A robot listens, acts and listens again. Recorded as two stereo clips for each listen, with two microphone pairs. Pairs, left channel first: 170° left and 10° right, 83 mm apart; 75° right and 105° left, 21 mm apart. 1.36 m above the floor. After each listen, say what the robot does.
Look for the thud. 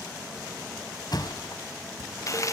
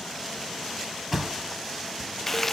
Turn 175° left.
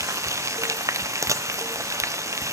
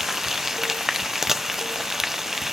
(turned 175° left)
I heard a thud from this way, but can't make it out now.